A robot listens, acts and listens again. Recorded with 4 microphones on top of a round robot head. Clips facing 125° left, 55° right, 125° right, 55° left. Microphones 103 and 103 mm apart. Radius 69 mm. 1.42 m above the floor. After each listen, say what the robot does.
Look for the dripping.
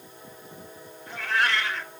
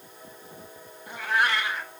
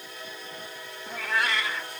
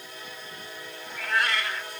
Keep listening.
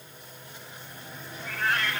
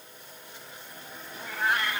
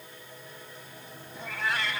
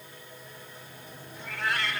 Keep listening.
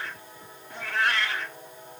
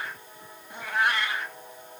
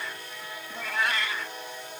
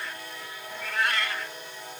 I can't make out dripping, only a cat meowing.